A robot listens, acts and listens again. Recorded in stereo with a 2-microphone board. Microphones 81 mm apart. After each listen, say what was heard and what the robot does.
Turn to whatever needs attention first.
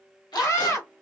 The scream: about 35° left or 145° left. Turn 35° left.
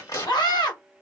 So it is at 105° left. Turn 105° left.
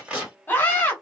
The scream is now 30° left. Turn 30° left.
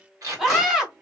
Facing the scream, 1 to 2 m away.